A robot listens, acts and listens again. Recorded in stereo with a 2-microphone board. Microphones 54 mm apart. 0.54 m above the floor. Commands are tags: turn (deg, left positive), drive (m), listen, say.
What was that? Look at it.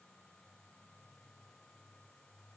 <listen/>
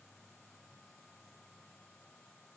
<listen/>
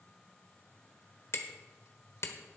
<turn deg="55"/>
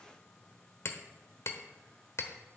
<turn deg="65"/>
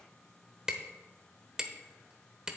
<turn deg="-15"/>
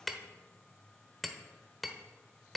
<say>Found it: hammering, straight ahead.</say>